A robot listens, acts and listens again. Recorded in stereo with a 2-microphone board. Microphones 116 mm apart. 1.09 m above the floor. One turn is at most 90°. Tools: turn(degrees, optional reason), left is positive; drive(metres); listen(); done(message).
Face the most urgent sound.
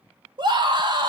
turn(degrees=-45, reason="The scream: about 45° right or 135° right.")
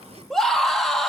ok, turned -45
done("Found it: a scream, straight ahead, 1 to 2 m away.")